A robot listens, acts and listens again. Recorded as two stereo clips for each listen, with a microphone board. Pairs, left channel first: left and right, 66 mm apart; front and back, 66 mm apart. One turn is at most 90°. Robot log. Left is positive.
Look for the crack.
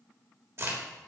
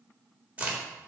note: The crack: 115° right.
cmd yaw -90
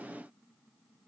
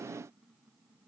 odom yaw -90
note: Nothing new. It was at 25° right.
cmd yaw -25
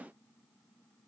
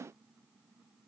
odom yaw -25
end: I heard a crack from this way, but can't make it out now.